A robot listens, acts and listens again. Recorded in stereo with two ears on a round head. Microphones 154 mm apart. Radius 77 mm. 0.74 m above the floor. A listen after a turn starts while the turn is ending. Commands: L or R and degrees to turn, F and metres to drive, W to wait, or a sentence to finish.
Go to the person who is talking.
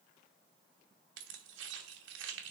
W
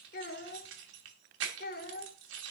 L55
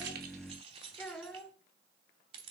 F1.0
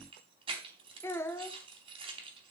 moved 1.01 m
L15
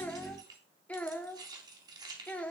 L10
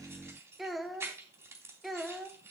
F1.0
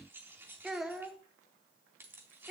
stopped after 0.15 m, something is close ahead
Arrived at the child speaking, straight ahead.